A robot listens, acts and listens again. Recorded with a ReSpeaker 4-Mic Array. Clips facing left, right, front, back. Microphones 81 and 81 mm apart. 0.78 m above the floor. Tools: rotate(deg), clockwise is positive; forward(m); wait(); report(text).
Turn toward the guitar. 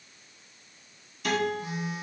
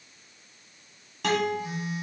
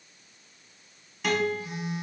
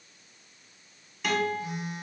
rotate(90)
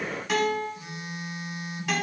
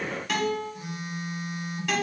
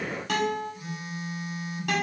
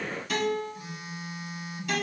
report("Found it: a guitar, straight ahead, 1 to 2 m away.")